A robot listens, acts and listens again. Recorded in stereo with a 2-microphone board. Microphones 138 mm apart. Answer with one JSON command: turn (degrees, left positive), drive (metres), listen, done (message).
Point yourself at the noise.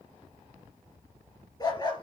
{"turn": 30}
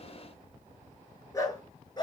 {"turn": 30}
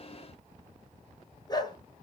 {"turn": 30}
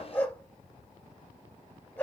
{"turn": 10}
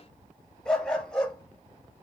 {"done": "Found it: a dog barking, straight ahead."}